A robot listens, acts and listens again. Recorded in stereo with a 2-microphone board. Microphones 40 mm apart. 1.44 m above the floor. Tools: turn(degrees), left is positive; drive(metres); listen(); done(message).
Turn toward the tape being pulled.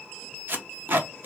turn(degrees=-50)
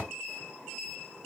listen()
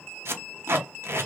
turn(degrees=-80)
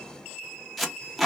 done("Found it: tape being pulled, straight ahead, under 1 m away.")